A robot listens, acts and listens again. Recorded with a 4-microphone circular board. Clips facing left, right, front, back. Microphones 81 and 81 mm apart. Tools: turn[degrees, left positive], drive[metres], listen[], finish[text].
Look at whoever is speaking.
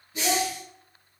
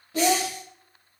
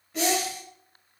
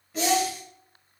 Thought: The child speaking: 90° right.
Action: turn[-90]
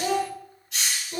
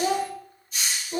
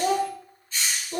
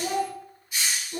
Thought: The child speaking is now 20° right.
Action: turn[-20]
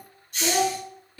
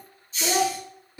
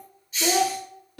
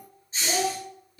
Thought: The child speaking is now 20° right.
Action: turn[-20]
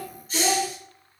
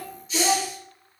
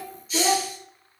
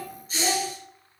Thought: The child speaking is now 15° right.
Action: turn[-15]
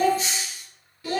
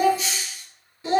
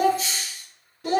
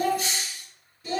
Thought: The child speaking is now 25° right.
Action: turn[-25]
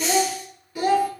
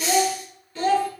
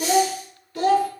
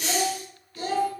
Thought: The child speaking is now 15° left.
Action: turn[15]
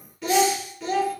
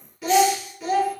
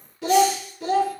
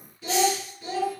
Action: finish[Found it: a child speaking, straight ahead.]